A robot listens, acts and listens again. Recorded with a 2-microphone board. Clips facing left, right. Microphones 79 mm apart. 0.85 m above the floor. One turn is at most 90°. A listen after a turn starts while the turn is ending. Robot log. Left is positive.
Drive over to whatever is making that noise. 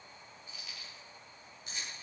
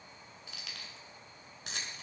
cmd yaw -90
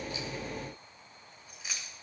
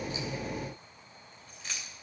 cmd fwd 1.0
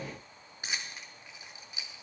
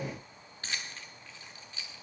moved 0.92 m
note: The keys jangling is now 15° left.
cmd yaw +15
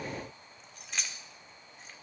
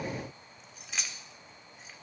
cmd fwd 1.0
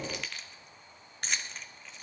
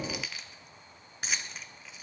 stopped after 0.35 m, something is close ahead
end: I am next to the keys jangling.